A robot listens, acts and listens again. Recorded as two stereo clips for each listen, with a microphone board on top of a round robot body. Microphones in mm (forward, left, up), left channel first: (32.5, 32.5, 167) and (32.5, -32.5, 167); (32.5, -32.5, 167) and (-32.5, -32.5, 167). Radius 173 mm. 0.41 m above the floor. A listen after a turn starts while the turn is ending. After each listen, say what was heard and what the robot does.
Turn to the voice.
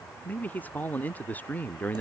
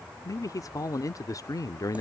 The man speaking: 25° left. Turn 25° left.
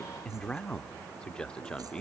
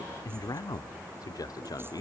The man speaking is now 15° left. Turn 15° left.
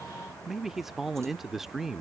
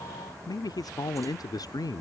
Facing the man speaking.